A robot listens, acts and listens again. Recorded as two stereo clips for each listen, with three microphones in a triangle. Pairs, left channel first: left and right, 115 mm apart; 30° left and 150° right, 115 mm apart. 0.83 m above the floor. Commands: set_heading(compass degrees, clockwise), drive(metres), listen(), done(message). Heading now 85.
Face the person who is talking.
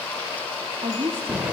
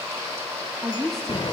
set_heading(145)
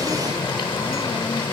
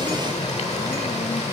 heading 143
listen()
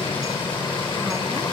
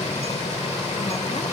listen()
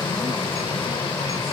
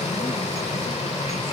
done("I heard a woman speaking from this way, but can't make it out now.")